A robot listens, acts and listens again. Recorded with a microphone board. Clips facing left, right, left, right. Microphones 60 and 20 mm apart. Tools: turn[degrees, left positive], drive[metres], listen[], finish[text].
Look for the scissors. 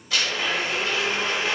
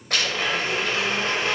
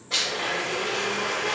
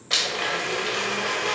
Action: listen[]
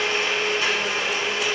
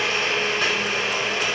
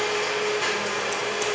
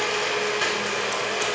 Action: listen[]
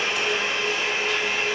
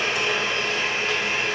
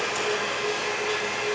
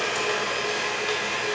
Action: finish[I can't make out scissors to turn to.]